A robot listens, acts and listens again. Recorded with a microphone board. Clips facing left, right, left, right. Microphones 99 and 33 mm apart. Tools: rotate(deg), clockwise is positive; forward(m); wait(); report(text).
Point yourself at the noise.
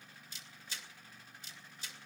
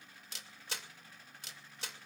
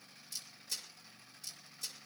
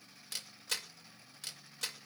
rotate(75)
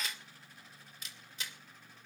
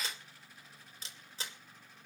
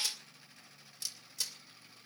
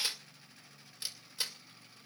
rotate(30)
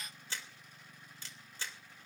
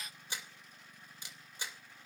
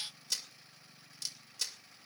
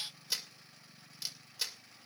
rotate(15)
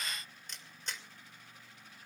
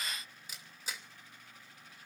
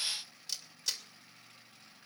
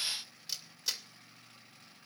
report("Found it: a camera shutter, straight ahead, 2 to 4 m away.")